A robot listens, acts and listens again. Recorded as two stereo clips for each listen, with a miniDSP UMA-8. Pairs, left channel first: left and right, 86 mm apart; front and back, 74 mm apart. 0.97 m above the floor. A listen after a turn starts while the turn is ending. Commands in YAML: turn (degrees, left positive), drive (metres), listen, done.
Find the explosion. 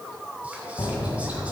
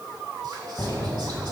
turn: 55
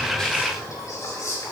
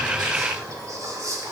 done: "I heard an explosion from this way, but can't make it out now."